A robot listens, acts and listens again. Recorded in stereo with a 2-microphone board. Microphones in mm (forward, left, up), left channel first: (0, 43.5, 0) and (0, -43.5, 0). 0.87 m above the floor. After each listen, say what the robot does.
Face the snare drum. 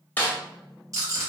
Turn 20° left.
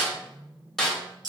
Found it: a snare drum, straight ahead.